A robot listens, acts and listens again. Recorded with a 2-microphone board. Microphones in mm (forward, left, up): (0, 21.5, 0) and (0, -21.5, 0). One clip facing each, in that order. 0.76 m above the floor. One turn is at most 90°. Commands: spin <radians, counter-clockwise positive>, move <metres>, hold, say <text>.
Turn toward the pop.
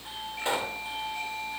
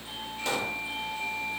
spin 0.35
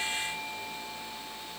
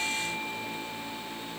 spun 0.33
hold
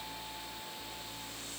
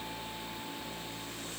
say I heard a pop, but can't make it out now. It was about straight ahead or 140° left.